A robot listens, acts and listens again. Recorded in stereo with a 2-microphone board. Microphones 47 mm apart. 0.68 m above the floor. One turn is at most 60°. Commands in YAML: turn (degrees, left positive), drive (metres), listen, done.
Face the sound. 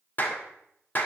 turn: 40
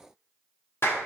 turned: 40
turn: 60
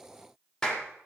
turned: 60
turn: 15
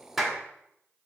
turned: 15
done: "Found it: a clap, straight ahead, 1 to 2 m away."